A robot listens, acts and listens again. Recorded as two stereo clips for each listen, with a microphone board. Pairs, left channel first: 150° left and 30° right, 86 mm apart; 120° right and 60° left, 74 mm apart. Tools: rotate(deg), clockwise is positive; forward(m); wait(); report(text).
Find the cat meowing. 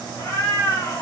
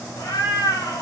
rotate(155)
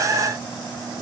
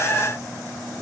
wait()
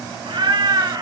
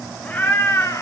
rotate(75)
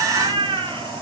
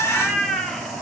rotate(35)
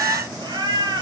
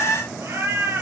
report("Facing the cat meowing.")